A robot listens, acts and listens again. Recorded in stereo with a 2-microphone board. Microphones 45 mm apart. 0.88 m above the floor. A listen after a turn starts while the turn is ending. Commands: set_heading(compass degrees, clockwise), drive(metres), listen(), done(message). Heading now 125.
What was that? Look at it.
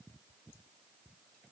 listen()
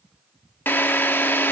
set_heading(75)
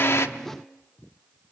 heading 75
listen()
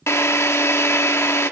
set_heading(355)
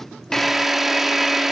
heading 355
done("Found it: a drill, straight ahead, under 1 m away.")